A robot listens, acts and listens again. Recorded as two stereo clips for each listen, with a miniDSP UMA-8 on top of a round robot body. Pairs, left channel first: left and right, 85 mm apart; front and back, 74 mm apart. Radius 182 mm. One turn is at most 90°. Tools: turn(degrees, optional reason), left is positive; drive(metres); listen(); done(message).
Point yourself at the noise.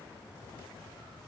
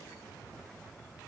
listen()
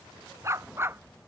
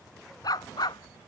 turn(degrees=-25, reason="The dog barking: 25° right.")
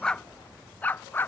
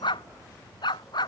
turn(degrees=20, reason="The dog barking is now 20° left.")
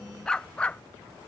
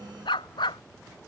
turn(degrees=10, reason="The dog barking is now 10° left.")
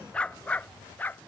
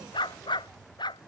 turn(degrees=20, reason="The dog barking is now 20° left.")
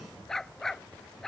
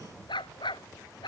done("Facing the dog barking.")